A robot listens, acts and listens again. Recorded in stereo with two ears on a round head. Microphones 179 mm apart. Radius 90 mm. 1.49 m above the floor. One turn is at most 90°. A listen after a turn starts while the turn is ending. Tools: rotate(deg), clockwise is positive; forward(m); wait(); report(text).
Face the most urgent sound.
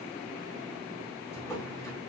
wait()
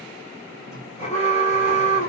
rotate(-30)
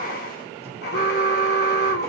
rotate(-90)
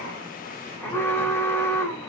rotate(-15)
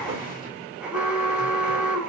report("Facing the alarm, 1 to 2 m away.")